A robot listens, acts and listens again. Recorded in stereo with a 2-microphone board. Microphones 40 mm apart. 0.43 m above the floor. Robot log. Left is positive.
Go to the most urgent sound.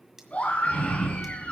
note: The scream: about 35° left or 145° left.
cmd yaw +35
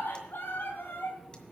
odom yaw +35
note: So it is at 110° left.
cmd yaw +110
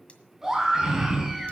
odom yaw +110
note: The scream is now 15° right.
cmd yaw -15
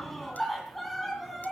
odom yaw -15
cmd fwd 1.0
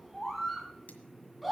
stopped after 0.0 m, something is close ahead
end: Something is in my way. I am facing the scream but have not reached it.